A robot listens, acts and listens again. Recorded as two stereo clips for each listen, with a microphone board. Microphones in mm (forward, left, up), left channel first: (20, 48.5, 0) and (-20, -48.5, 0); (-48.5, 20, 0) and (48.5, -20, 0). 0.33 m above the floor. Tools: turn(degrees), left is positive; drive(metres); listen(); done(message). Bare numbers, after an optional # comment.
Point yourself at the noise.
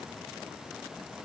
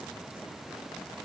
listen()
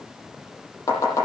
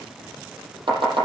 # The chopping: 10° left.
turn(10)
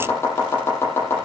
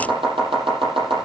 done("Facing the chopping.")